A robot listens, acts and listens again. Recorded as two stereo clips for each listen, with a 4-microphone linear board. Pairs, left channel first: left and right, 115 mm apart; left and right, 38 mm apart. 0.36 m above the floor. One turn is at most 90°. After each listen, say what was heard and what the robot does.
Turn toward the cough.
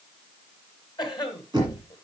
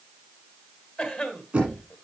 The cough: about 40° left or 140° left. Turn 40° left.
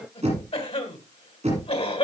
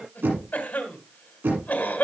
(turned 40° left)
So it is at 90° left. Turn 90° left.
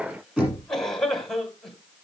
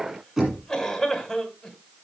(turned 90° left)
Found it: a cough, straight ahead, 2 to 4 m away.